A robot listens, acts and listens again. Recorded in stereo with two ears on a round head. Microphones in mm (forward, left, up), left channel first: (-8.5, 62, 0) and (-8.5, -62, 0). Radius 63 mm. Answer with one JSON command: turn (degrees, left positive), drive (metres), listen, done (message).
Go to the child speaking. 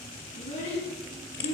{"turn": 40}
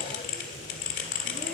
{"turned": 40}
{"listen": true}
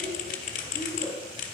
{"drive": 1.0}
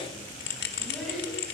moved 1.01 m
{"drive": 1.0}
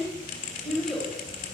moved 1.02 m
{"drive": 1.0}
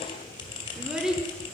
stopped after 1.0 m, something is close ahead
{"done": "I am next to the child speaking."}